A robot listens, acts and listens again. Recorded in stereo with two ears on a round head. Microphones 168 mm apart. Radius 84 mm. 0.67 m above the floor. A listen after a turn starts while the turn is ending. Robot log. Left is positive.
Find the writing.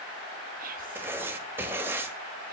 cmd yaw -30
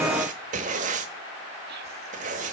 note: So it is at 140° right.
cmd yaw -140
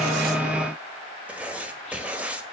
end: Found it: writing, straight ahead.